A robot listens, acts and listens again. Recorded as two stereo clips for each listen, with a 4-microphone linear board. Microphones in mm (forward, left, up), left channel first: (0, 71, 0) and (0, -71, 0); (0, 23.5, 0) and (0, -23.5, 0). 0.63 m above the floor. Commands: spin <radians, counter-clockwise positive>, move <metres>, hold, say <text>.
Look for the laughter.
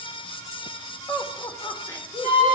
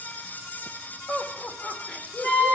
spin 0.26
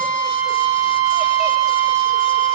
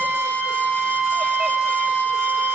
hold
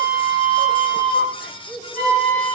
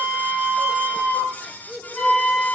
spin -0.52
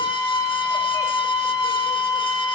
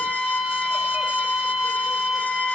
hold
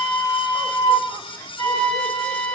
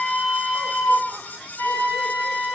hold
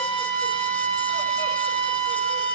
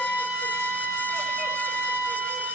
say I heard laughter, but can't make it out now. It was about 25° left or 145° right.